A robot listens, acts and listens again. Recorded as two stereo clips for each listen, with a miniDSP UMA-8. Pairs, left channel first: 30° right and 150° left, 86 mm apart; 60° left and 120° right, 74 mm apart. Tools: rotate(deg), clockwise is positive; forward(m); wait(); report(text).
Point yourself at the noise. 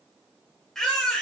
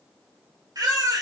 rotate(110)
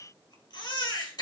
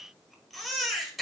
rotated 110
rotate(30)
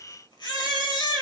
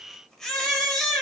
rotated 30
rotate(25)
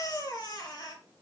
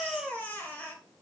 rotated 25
report("Found it: a baby crying, straight ahead.")